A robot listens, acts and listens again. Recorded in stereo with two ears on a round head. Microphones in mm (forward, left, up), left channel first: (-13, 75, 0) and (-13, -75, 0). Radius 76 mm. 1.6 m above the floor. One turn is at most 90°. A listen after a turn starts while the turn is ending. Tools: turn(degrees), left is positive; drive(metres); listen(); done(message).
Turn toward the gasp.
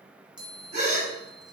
turn(degrees=-45)
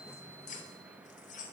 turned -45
listen()
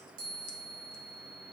done("I heard a gasp, but can't make it out now. It was about straight ahead or 90° right.")